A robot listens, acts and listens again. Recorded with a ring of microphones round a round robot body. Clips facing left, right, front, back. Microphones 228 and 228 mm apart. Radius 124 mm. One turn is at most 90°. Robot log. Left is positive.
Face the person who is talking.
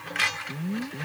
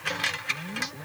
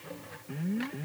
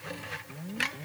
cmd idle
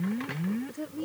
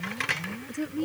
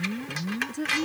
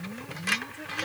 note: The woman speaking: 20° right.
cmd yaw -20
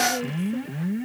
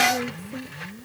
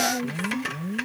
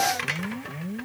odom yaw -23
cmd idle
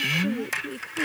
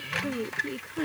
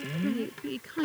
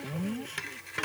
end: Found it: a woman speaking, straight ahead.